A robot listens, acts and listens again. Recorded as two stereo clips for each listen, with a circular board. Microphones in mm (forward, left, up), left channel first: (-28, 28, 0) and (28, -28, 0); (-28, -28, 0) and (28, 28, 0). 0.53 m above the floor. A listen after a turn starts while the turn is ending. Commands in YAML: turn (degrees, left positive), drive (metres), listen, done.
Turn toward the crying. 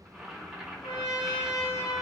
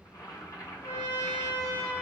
listen: true
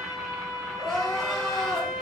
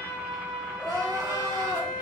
turn: 55
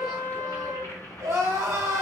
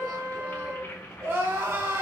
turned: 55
done: "Found it: crying, straight ahead."